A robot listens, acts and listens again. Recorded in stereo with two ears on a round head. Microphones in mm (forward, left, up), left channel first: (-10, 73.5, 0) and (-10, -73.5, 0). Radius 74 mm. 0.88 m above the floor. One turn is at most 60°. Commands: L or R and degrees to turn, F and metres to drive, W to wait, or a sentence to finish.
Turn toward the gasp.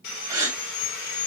R20
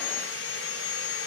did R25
W
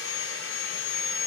I heard a gasp, but can't make it out now. It was about 5° left or 135° right.